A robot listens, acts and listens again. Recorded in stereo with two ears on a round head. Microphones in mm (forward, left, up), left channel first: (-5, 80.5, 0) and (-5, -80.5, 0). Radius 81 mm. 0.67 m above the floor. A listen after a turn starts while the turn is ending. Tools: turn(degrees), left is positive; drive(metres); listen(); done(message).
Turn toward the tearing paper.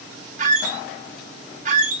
listen()
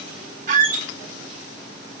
listen()
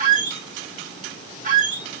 done("I can't make out tearing paper to turn to.")